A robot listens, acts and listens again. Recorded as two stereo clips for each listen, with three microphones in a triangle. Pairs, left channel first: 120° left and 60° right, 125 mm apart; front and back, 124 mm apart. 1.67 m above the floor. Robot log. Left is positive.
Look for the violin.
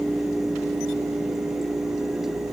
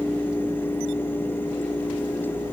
cmd idle
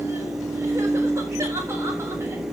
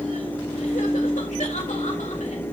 cmd idle
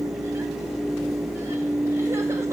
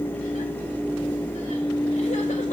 end: I can't make out a violin to turn to.